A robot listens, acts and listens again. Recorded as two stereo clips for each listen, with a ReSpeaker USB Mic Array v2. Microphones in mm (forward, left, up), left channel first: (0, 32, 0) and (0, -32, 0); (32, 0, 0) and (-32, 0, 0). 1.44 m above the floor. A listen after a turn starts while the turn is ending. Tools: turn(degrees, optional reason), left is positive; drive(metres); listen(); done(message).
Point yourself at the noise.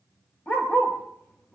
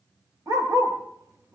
turn(degrees=150, reason="The dog barking: 150° left.")
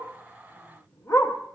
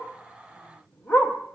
turn(degrees=50, reason="The dog barking is now 50° left.")
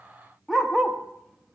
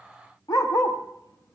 done("Found it: a dog barking, straight ahead.")